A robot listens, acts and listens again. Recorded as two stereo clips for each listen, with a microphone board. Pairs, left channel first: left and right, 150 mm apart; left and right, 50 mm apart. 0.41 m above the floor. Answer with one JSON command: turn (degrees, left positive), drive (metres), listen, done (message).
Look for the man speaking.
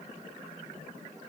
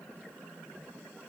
{"listen": true}
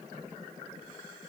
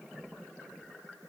{"listen": true}
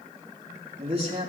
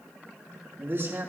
{"turn": -40}
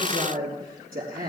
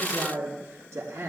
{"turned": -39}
{"turn": -95}
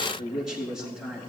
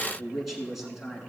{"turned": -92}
{"done": "Facing the man speaking, over 4 m away."}